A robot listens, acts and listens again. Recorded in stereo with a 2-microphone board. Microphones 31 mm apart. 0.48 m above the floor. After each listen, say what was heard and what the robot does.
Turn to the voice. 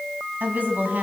The woman speaking: about 60° right or 120° right. Turn 60° right.
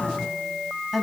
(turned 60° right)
Found it: a woman speaking, straight ahead.